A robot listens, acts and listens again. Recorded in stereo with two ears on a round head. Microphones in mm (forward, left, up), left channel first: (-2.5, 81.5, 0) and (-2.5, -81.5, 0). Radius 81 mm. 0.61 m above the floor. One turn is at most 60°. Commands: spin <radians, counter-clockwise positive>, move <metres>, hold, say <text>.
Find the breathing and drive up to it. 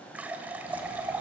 hold
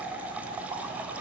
hold
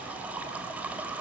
say I can't make out breathing, only a running tap.